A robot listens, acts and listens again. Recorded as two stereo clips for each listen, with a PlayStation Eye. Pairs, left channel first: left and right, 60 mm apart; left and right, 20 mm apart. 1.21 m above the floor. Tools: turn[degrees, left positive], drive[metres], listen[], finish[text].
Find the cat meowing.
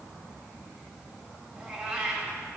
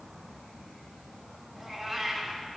Thought: The cat meowing: about 20° right or 160° right.
Action: turn[-20]
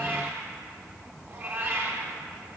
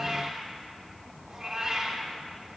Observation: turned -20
Thought: So it is at 140° right.
Action: turn[-140]
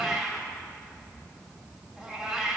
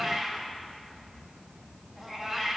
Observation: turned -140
Action: finish[Facing the cat meowing, 2 to 4 m away.]